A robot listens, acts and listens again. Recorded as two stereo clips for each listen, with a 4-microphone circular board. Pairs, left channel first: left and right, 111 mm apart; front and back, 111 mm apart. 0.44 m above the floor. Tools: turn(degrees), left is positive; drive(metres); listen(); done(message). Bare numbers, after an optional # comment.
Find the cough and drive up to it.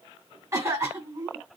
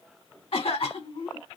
# The cough: 25° right.
turn(-25)
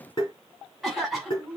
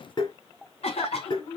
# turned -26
drive(1.0)
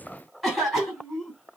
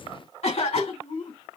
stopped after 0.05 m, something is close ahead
done("Blocked. The cough is further on, straight ahead.")